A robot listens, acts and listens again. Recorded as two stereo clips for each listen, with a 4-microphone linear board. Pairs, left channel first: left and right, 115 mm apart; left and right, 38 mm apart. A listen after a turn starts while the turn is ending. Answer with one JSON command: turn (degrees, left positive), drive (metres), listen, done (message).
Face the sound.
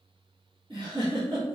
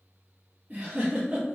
{"turn": -40}
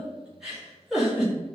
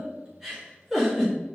{"done": "Facing the giggle."}